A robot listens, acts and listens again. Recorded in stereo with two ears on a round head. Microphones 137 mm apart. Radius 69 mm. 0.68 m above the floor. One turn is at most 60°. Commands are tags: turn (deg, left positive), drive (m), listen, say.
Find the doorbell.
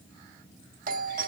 <turn deg="-60"/>
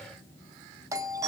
<turn deg="-25"/>
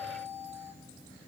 <turn deg="-20"/>
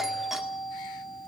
<say>Facing the doorbell.</say>